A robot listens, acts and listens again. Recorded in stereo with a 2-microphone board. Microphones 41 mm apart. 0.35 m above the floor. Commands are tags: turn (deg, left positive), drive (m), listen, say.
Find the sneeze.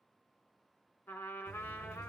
<listen/>
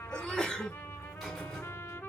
<turn deg="20"/>
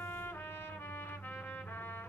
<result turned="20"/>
<listen/>
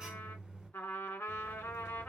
<say>I heard a sneeze, but can't make it out now. It was about straight ahead or 140° left.</say>